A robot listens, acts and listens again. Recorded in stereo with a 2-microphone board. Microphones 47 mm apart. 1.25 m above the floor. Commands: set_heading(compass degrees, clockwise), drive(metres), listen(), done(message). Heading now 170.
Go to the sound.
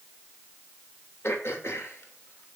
set_heading(105)
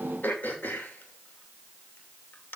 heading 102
set_heading(57)
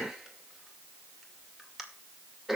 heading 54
drive(1.0)
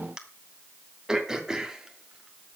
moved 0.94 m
set_heading(64)
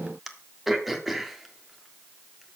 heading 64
drive(1.0)
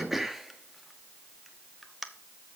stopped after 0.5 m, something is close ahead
done("I am next to the throat clearing.")